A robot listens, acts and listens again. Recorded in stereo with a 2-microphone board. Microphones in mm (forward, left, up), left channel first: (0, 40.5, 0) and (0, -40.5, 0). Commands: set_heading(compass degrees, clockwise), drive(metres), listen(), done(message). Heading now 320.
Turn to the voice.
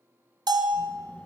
set_heading(305)
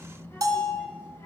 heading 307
set_heading(157)
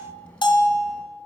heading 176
set_heading(161)
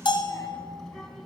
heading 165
done("Found it: a child speaking, straight ahead.")